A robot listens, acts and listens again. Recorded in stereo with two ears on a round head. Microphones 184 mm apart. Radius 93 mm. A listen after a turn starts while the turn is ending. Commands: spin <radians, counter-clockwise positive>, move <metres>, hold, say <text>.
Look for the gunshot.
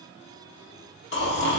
hold
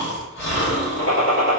spin 1.57
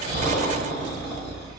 say Facing where the gunshot came from. I can't hear it now.